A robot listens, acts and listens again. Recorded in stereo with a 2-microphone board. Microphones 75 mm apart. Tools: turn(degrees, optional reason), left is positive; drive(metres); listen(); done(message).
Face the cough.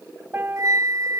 listen()
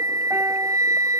listen()
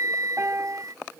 done("I can't make out a cough to turn to.")